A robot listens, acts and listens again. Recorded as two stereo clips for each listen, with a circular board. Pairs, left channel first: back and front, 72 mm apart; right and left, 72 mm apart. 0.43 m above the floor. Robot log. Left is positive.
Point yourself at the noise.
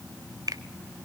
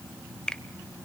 note: The finger snap: 15° right.
cmd yaw -15
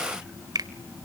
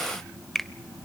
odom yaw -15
end: Found it: a finger snap, straight ahead.